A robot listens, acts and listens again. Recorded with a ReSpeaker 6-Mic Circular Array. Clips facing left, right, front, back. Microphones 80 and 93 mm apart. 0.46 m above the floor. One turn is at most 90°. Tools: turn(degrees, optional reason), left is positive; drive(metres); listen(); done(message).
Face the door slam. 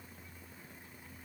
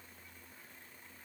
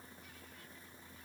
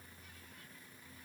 listen()
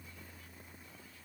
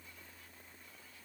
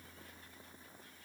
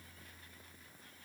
listen()
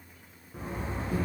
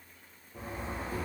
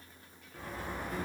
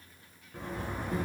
turn(degrees=90, reason="The door slam: 110° left.")
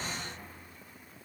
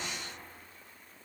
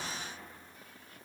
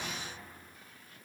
turn(degrees=20, reason="Nothing new. It was at 20° left.")
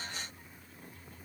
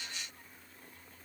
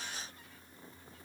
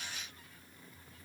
done("Facing where the door slam came from. I can't hear it now.")